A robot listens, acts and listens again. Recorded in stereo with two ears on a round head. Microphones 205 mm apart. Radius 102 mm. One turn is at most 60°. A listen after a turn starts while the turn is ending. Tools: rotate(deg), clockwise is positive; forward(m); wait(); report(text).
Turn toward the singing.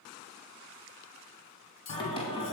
rotate(-25)
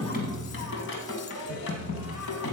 rotate(-60)
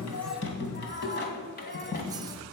rotate(-40)
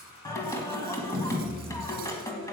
rotate(-15)
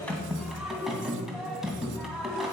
report("Facing the singing, 2 to 4 m away.")